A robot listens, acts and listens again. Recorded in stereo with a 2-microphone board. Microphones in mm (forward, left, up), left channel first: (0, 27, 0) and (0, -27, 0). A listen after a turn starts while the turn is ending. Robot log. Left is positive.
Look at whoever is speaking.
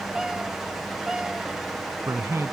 note: The man speaking: about 60° right or 120° right.
cmd yaw -60
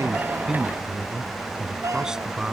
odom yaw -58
note: So it is at 15° right.
cmd yaw -15
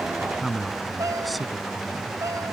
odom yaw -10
end: Facing the man speaking.